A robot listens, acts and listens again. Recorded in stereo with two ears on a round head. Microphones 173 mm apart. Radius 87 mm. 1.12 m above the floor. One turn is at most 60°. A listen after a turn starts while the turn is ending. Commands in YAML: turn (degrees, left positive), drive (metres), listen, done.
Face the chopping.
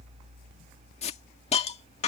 listen: true
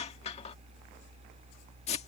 listen: true
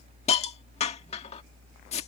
done: "I can't make out chopping to turn to."